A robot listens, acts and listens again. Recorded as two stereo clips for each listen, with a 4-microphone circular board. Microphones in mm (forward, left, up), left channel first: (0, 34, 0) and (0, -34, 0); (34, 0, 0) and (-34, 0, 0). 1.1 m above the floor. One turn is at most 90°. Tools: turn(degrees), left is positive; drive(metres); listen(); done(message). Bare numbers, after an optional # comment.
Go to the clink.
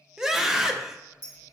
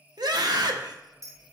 # The clink: 140° left.
turn(90)
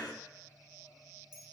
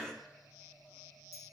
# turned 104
# The clink is now 35° left.
turn(35)
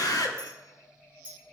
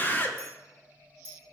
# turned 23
# The clink is now 15° left.
turn(15)
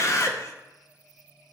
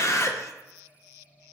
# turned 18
listen()
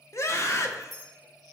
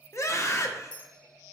drive(1.0)
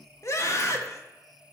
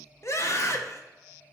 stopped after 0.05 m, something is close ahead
listen()
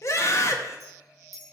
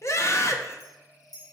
done("Something is in my way. I am facing the clink but have not reached it.")